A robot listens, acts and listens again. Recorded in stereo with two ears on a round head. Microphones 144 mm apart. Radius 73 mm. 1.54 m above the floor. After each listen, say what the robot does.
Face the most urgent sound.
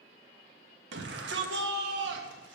Turn 90° right.
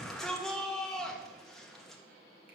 Facing the shout.